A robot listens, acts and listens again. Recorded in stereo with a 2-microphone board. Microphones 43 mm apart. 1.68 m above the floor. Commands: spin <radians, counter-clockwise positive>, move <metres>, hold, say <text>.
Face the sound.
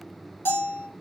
spin 1.13
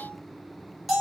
say Found it: a bell, straight ahead, 2 to 4 m away.